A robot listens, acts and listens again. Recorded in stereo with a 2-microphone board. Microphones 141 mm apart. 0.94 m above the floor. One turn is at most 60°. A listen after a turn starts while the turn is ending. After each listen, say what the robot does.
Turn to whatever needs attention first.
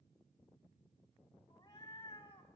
Keep listening.
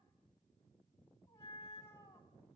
Keep listening.
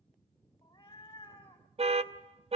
Turn 45° right.
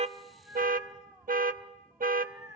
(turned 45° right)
Turn 60° right.
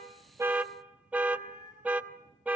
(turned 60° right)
Turn 10° right.
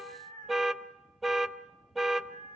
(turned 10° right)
Facing the alarm, under 1 m away.